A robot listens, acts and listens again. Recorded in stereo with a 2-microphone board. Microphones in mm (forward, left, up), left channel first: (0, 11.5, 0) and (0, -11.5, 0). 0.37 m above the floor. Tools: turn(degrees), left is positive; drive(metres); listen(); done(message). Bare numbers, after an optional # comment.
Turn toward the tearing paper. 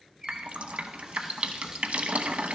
listen()
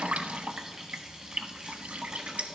listen()
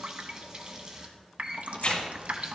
# The tearing paper: about 55° left or 125° left.
turn(55)
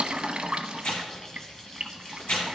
# So it is at 70° left.
turn(70)
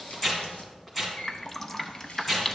# The tearing paper is now 10° left.
turn(10)
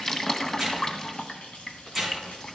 done("Facing the tearing paper.")